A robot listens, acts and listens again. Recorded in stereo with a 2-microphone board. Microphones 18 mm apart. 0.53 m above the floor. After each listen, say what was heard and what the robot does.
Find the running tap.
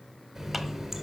Turn 30° right.
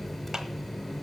So it is at 20° left. Turn 20° left.
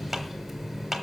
Found it: a running tap, straight ahead, 1 to 2 m away.